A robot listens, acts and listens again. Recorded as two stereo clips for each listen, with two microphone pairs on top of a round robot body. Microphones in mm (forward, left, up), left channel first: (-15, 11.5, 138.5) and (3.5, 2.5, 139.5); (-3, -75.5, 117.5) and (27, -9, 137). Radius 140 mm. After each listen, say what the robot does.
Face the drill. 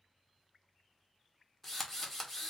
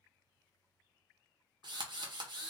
Turn 80° left.
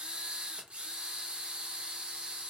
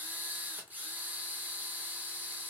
Found it: a drill, straight ahead, 1 to 2 m away.